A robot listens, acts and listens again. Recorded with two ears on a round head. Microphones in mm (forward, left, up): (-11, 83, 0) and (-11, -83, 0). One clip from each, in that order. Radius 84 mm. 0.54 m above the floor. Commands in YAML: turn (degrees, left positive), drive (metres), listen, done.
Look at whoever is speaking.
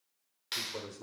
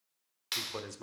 turn: -55
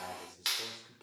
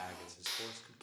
turn: -55
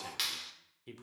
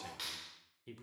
turn: 10
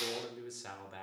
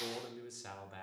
done: "Facing the man speaking."